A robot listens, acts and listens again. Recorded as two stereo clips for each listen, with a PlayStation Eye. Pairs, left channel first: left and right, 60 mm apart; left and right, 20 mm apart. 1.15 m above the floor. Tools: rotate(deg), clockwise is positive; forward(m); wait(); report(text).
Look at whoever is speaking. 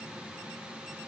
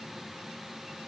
wait()
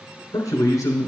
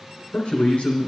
rotate(-90)
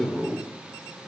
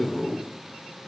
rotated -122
rotate(30)
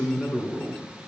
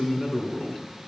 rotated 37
rotate(-10)
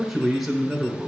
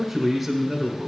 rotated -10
report("Found it: a man speaking, straight ahead.")